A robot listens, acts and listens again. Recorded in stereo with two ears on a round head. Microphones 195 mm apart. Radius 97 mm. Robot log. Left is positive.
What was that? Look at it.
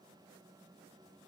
cmd idle
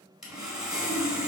cmd yaw -30
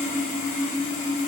note: So it is at 30° left.
cmd yaw +30
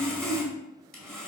end: Facing the sawing.